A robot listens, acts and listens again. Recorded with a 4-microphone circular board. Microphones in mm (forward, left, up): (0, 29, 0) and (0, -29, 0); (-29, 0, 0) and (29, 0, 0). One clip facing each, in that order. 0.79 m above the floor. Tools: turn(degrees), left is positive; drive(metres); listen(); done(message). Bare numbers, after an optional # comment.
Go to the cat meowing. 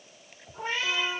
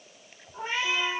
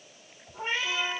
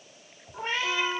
# The cat meowing: 20° right.
turn(-20)
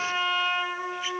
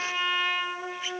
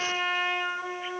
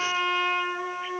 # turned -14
listen()
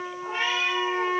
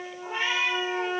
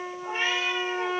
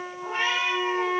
drive(1.0)
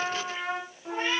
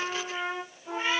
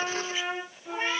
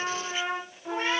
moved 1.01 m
drive(1.0)
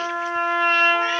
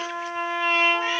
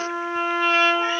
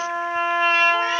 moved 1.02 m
listen()
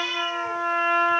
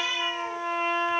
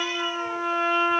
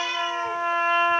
drive(1.0)
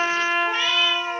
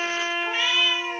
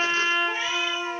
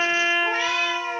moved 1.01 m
drive(1.0)
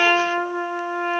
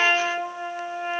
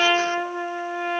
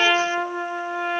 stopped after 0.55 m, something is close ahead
listen()
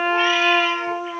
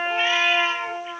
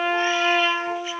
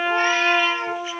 listen()
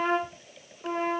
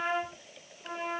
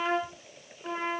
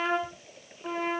done("I heard a cat meowing from this way, but can't make it out now. I did not reach it.")